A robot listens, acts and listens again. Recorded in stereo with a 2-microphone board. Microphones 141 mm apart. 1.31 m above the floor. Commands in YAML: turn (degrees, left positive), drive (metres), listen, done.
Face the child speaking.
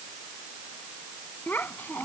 turn: 30
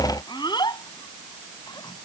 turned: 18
turn: 30
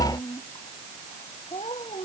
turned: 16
turn: 135
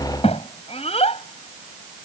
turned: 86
turn: 45
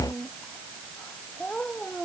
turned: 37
turn: 10
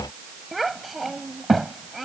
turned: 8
done: "Found it: a child speaking, straight ahead."